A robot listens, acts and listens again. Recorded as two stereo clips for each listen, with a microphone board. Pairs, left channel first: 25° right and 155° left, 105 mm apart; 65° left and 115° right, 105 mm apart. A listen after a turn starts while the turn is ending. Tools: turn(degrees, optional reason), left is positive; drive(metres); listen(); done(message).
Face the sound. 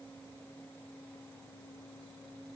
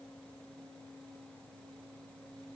listen()
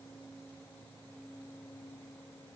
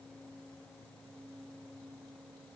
listen()
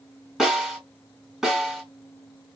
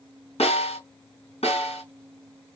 turn(degrees=70, reason="The snare drum: 70° left.")
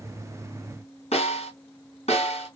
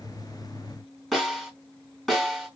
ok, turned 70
turn(degrees=-20, reason="The snare drum is now 20° right.")
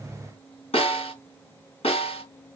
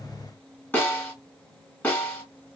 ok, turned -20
done("Facing the snare drum, 2 to 4 m away.")